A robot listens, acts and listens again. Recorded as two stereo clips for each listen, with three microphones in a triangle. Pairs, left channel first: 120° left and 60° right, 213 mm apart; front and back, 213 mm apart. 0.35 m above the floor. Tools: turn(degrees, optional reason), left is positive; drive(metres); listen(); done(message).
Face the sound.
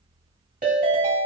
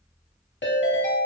turn(degrees=-20, reason="The ringtone: 20° right.")
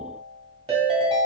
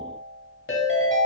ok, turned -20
done("Found it: a ringtone, straight ahead, under 1 m away.")